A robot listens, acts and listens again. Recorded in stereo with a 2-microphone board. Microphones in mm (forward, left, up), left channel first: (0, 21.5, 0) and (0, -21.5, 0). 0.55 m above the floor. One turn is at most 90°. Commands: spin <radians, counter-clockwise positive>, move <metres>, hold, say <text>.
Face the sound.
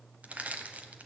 spin -0.61
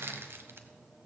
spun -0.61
spin -1.57
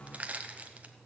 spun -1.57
spin -0.61
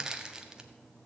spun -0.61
spin -0.26
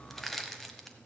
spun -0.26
say Facing the crushing.